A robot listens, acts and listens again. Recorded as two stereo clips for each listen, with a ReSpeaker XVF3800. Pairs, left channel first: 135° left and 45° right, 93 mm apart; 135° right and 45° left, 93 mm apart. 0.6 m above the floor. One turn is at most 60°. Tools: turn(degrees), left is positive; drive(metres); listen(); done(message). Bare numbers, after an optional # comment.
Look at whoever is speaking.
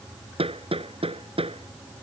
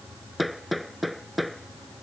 listen()
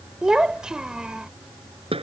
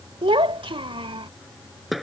# The child speaking: 35° left.
turn(35)
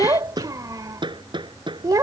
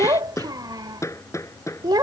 done("Facing the child speaking.")